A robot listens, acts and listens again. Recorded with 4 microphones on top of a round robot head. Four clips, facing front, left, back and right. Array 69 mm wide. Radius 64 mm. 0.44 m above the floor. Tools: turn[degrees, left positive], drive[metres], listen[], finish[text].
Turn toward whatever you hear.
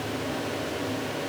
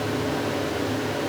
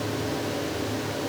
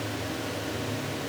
Action: listen[]
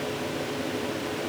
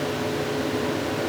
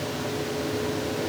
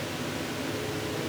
Action: listen[]
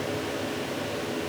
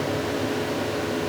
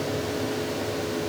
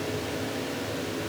Action: finish[I can't make out anything.]